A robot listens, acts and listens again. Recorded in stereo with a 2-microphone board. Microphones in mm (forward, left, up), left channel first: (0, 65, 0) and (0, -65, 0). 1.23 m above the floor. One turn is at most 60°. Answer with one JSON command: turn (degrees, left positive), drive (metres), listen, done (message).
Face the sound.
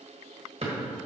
{"turn": -55}
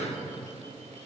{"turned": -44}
{"listen": true}
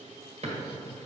{"turn": -60}
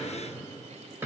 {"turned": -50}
{"turn": -20}
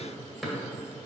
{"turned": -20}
{"done": "Facing the drawer."}